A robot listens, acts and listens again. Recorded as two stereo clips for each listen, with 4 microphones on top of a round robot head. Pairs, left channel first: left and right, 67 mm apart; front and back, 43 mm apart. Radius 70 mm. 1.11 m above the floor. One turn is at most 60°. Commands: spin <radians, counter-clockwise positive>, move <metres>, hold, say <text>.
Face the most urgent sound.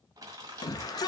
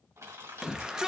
spin 1.05
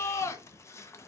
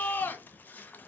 spin 0.79
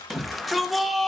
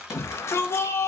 say Facing the shout, 1 to 2 m away.